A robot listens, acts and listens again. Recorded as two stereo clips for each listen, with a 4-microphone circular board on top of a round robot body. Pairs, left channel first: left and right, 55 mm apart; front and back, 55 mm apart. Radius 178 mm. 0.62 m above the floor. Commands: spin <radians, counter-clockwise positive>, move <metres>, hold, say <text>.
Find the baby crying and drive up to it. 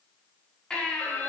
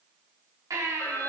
spin 2.88
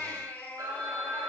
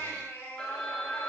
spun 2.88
spin 0.70
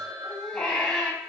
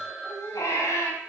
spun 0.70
spin 0.26
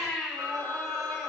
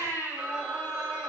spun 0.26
move 1.0
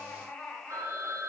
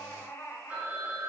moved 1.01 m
spin 0.26
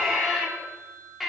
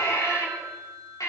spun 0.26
move 1.0
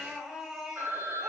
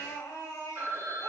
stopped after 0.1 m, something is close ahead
say Blocked. The baby crying is further on, straight ahead.